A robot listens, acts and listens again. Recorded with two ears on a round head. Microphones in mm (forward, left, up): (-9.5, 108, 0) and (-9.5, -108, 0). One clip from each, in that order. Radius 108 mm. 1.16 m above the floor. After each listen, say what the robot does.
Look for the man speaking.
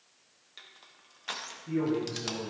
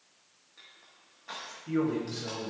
Turn 40° right.
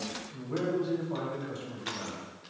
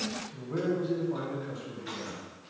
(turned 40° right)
Turn 25° left.
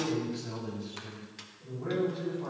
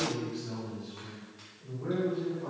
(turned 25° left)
Turn 20° left.
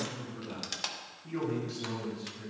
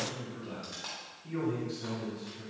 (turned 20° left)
Found it: a man speaking, straight ahead, 2 to 4 m away.